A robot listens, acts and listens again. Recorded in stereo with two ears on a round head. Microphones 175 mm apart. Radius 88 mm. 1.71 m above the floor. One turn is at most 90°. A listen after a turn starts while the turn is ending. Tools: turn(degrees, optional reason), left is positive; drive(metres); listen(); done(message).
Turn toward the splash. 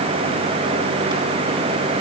listen()
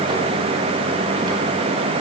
listen()
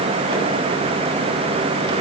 done("I can't make out a splash.")